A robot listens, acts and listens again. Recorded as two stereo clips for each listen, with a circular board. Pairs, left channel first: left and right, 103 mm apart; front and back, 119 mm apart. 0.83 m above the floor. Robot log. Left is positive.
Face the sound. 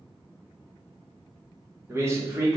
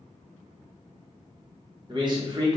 note: The man speaking: 135° right.
cmd yaw -135
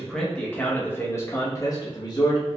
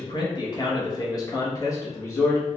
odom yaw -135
note: The man speaking is now 60° left.
cmd yaw +60
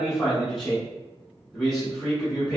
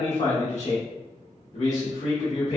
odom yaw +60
end: Facing the man speaking, 1 to 2 m away.